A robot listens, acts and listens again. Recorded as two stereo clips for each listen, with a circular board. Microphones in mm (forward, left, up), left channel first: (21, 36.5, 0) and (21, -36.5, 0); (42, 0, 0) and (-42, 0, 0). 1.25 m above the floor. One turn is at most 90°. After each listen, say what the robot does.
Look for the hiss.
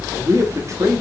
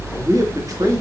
Keep listening.
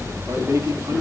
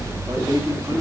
Keep listening.
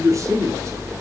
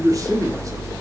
I can't make out a hiss to turn to.